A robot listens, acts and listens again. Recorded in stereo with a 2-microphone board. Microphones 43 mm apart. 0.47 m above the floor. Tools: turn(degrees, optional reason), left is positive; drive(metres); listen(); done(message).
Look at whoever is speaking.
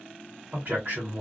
turn(degrees=-45, reason="The man speaking: about 45° right or 135° right.")
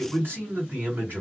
turn(degrees=-80, reason="So it is at 80° right.")
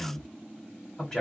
turn(degrees=10, reason="The man speaking is now 10° left.")
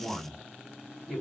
done("Facing the man speaking, 1 to 2 m away.")